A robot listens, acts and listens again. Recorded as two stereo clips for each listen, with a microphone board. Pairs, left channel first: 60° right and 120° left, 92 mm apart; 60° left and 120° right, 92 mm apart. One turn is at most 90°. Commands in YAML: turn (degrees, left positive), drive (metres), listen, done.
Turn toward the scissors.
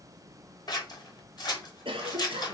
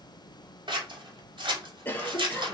turn: -90
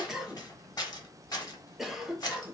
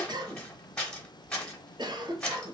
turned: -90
turn: -20
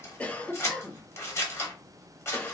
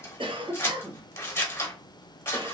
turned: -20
done: "Found it: scissors, straight ahead."